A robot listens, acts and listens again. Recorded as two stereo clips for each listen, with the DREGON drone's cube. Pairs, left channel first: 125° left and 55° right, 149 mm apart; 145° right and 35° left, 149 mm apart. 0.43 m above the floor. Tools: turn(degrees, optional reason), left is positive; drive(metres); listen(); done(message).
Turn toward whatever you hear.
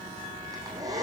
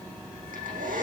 turn(degrees=10, reason="The hair dryer: 10° left.")
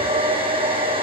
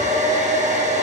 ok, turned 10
done("Facing the hair dryer.")